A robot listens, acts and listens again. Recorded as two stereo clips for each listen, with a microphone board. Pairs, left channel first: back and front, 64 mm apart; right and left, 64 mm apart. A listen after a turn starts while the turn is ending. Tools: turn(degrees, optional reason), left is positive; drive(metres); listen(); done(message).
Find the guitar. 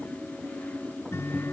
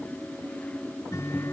turn(degrees=-130, reason="The guitar: 130° right.")
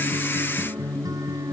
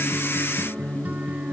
turn(degrees=25, reason="The guitar is now 25° left.")
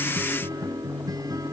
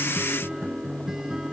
turn(degrees=10, reason="The guitar is now 10° left.")
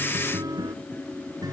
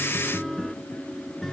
done("Found it: a guitar, straight ahead.")